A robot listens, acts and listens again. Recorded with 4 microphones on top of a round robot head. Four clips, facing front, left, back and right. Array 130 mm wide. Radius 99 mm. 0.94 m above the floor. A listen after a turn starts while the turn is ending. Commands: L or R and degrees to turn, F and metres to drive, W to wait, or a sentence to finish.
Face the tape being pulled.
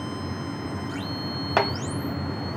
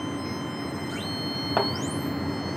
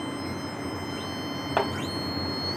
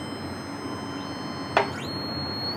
W
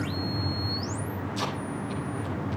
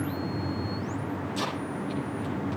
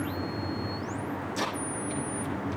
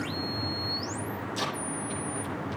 R145
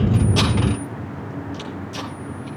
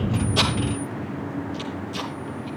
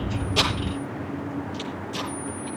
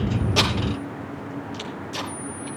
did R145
R35
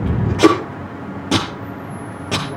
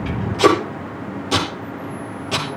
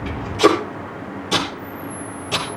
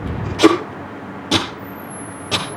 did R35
R20
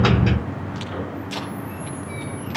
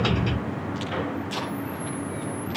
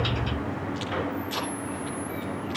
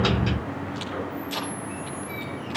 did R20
Found it: tape being pulled, straight ahead, over 4 m away.